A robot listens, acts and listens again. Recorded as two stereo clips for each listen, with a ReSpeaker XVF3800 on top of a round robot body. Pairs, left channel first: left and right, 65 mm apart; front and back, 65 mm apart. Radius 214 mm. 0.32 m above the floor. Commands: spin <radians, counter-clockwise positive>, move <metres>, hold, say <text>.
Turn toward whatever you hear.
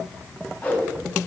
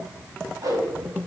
spin 2.71
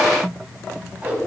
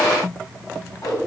spin -0.35
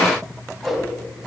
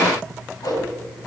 say Facing the whoosh, 2 to 4 m away.